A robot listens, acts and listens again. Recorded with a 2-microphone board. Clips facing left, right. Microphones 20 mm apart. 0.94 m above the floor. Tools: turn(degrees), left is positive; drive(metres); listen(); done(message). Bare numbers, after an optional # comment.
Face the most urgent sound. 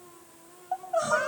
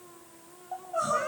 # The crying: about 35° left or 145° left.
turn(35)
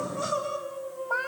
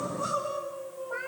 # So it is at 110° left.
turn(110)
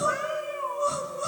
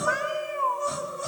done("Found it: crying, straight ahead, over 4 m away.")